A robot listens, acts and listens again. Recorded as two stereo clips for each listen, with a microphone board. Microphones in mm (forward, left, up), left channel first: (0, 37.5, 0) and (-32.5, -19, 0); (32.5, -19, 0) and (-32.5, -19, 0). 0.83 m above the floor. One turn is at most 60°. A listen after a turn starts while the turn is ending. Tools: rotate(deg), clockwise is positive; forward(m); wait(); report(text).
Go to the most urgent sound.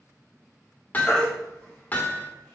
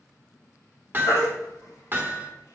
rotate(15)
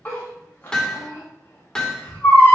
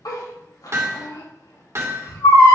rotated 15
forward(1.0)
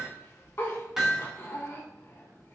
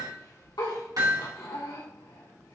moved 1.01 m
wait()
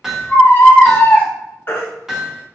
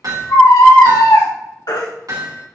rotate(-10)
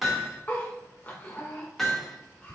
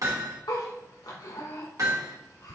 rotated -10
wait()
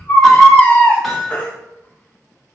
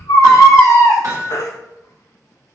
forward(1.0)
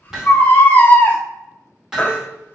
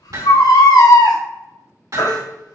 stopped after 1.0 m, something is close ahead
report("Arrived at the baby crying, straight ahead.")